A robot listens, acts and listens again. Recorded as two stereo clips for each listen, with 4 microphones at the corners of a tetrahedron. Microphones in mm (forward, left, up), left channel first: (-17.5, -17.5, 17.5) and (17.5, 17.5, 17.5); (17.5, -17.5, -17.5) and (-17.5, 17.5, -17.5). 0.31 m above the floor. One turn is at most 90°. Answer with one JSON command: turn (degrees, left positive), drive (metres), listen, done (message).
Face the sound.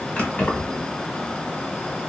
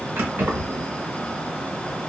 {"turn": 90}
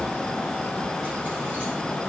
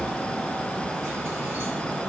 {"turn": 85}
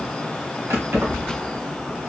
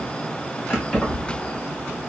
{"turn": 25}
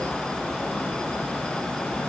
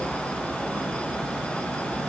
{"listen": true}
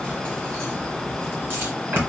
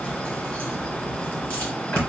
{"turn": 10}
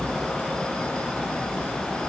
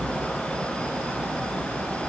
{"done": "Facing the keys jangling."}